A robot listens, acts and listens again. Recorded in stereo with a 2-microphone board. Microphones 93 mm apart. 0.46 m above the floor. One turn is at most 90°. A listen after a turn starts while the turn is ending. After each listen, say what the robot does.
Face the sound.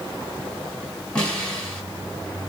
Turn 30° left.
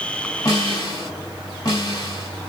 Turn 90° left.
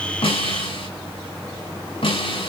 Turn 85° left.
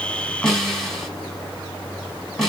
Found it: a snare drum, straight ahead.